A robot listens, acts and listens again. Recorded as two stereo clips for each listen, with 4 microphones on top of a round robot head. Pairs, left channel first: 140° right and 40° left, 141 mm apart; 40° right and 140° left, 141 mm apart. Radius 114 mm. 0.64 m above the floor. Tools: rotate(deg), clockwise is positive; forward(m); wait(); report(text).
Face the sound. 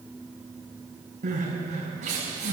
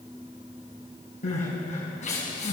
report("Facing the crying, over 4 m away.")